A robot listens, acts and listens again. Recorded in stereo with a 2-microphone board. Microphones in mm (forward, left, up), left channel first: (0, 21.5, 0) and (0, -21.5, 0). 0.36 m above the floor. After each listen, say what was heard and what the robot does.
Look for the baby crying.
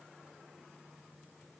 Keep listening.
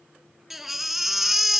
Turn 30° right.
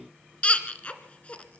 So it is at 30° left. Turn 30° left.
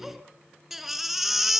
Facing the baby crying.